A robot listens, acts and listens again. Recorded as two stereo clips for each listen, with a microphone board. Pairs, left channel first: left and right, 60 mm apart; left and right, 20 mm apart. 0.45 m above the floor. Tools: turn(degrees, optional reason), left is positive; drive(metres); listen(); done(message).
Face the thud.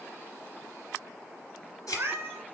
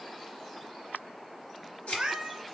turn(degrees=90)
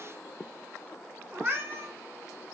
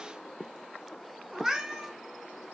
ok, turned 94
done("Facing where the thud came from. I can't hear it now.")